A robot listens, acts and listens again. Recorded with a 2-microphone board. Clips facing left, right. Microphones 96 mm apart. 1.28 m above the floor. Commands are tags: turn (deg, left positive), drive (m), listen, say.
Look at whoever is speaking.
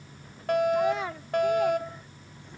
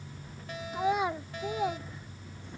<turn deg="-20"/>
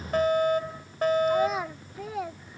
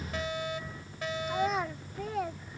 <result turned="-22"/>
<say>Facing the child speaking.</say>